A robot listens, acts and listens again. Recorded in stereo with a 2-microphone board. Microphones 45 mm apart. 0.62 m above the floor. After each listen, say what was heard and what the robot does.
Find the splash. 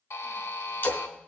The splash: about 60° left or 120° left. Turn 60° left.
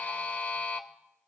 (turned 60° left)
Keep listening.
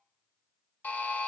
I heard a splash, but can't make it out now. It was about straight ahead or 60° left.